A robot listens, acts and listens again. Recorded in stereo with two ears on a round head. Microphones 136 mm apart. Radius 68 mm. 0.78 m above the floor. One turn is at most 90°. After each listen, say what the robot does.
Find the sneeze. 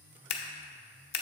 Keep listening.
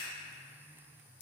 Keep listening.
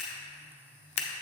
I can't make out a sneeze to turn to.